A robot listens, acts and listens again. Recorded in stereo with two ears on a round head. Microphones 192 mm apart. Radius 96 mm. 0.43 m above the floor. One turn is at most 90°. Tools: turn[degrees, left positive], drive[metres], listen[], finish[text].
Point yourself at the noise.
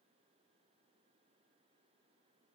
Action: listen[]
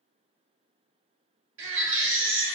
Thought: The baby crying: about 60° right or 120° right.
Action: turn[-60]
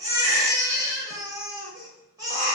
Thought: So it is at 20° right.
Action: turn[-20]
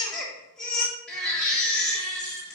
Action: finish[Facing the baby crying, 1 to 2 m away.]